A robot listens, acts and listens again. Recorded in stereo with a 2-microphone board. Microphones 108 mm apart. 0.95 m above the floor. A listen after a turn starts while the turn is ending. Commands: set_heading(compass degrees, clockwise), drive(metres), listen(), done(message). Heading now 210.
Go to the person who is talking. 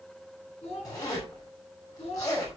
set_heading(140)
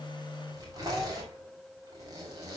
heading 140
listen()
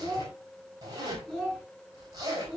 drive(1.0)
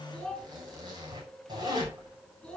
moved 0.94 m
drive(1.0)
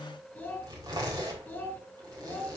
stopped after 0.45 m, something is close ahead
set_heading(130)
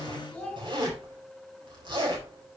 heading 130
done("Blocked. The child speaking is further on, straight ahead.")